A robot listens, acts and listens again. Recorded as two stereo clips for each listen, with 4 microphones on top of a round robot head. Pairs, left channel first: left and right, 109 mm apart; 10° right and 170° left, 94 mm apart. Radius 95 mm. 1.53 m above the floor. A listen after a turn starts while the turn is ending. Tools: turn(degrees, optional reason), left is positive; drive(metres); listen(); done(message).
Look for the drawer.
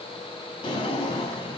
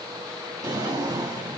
turn(degrees=120, reason="The drawer: 120° left.")
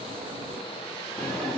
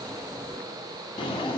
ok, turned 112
turn(degrees=10, reason="The drawer is now 10° left.")
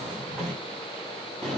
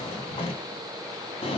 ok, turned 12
done("Found it: a drawer, straight ahead, 1 to 2 m away.")